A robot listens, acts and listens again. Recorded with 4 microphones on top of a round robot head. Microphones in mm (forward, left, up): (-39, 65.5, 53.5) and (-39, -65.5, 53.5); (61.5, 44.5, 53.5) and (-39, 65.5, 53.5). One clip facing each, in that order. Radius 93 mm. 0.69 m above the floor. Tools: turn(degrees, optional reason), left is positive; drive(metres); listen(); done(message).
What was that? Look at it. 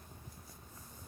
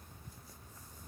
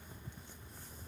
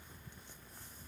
listen()
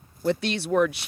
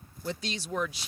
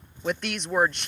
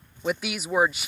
turn(degrees=85, reason="The woman speaking: 85° left.")
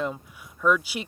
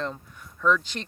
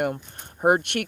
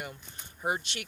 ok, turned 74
turn(degrees=10, reason="The woman speaking is now 10° left.")
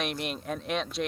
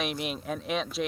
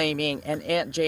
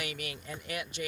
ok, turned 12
done("Facing the woman speaking.")